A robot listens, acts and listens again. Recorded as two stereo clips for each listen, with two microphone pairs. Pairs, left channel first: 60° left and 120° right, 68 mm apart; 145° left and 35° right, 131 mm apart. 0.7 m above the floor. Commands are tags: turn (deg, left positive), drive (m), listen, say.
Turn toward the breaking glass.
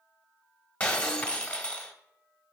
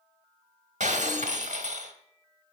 <turn deg="-10"/>
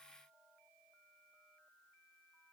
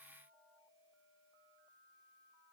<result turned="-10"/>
<say>Facing where the breaking glass came from. I can't hear it now.</say>